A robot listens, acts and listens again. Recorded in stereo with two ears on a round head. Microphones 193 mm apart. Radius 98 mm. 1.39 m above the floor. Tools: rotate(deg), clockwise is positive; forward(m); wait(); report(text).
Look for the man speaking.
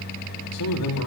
rotate(-90)
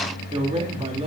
rotate(25)
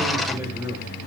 rotate(10)
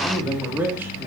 rotate(10)
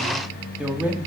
report("Found it: a man speaking, straight ahead.")